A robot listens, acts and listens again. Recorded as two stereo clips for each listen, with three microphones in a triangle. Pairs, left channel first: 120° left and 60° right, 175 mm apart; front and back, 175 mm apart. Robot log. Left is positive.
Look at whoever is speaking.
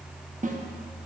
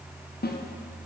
cmd idle
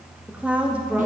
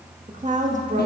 note: The woman speaking: 140° right.
cmd yaw -140
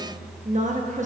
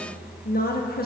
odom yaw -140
note: The woman speaking is now 20° right.
cmd yaw -20
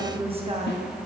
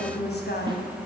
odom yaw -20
end: Found it: a woman speaking, straight ahead.